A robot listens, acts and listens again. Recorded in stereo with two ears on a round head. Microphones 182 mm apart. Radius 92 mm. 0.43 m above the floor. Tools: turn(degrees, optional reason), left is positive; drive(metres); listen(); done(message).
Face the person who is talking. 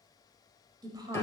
turn(degrees=-20, reason="The woman speaking: about 20° right or 160° right.")
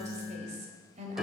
turn(degrees=-135, reason="So it is at 135° right.")
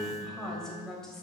done("Found it: a woman speaking, straight ahead.")